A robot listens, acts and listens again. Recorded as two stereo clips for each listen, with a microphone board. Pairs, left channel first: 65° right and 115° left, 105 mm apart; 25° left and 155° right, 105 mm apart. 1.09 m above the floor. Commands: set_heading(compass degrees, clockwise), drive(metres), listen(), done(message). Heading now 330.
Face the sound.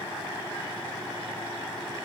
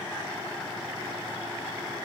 listen()
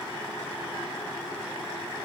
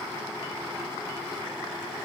listen()
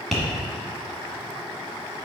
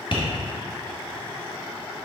set_heading(310)
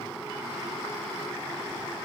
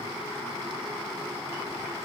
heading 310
listen()
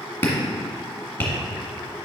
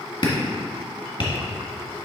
done("Facing the tapping.")